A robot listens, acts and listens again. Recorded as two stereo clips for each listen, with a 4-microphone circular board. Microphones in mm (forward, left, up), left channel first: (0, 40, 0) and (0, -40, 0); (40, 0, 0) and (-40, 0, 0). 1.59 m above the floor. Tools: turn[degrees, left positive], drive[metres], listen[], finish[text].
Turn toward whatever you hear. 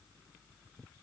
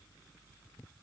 Action: listen[]
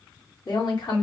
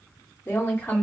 Thought: The woman speaking: 65° left.
Action: turn[65]
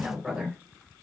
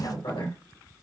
Action: finish[Facing the woman speaking, 2 to 4 m away.]